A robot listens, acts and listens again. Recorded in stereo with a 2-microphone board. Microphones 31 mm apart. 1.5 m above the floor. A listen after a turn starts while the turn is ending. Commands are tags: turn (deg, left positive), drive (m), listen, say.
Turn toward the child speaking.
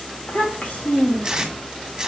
<turn deg="55"/>
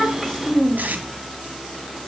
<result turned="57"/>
<say>Facing the child speaking.</say>